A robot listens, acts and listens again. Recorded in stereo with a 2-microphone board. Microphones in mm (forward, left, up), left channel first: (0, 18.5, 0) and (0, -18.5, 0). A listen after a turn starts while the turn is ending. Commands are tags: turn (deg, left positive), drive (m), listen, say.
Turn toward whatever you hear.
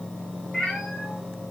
<turn deg="-30"/>
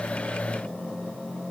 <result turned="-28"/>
<listen/>
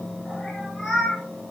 <turn deg="30"/>
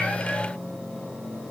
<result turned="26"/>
<listen/>
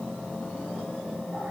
<listen/>
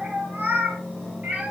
<turn deg="-40"/>
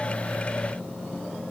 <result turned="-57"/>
<turn deg="15"/>
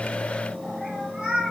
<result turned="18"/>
<say>Found it: a cat meowing, straight ahead.</say>